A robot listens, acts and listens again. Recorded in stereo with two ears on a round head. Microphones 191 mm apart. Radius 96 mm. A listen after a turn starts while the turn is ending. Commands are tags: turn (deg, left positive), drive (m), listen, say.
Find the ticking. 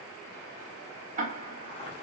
<turn deg="-40"/>
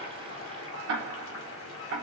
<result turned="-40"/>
<turn deg="-95"/>
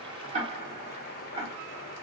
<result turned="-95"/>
<turn deg="-30"/>
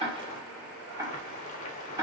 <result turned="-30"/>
<turn deg="-15"/>
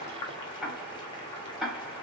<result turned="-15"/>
<say>Found it: ticking, straight ahead, 1 to 2 m away.</say>